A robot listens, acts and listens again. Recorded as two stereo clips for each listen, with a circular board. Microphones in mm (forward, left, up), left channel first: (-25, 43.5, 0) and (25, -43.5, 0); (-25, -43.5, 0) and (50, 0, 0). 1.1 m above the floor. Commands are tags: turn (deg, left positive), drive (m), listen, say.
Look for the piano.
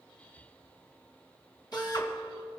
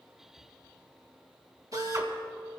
<turn deg="-155"/>
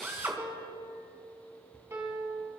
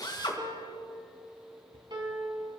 <say>Facing the piano, 2 to 4 m away.</say>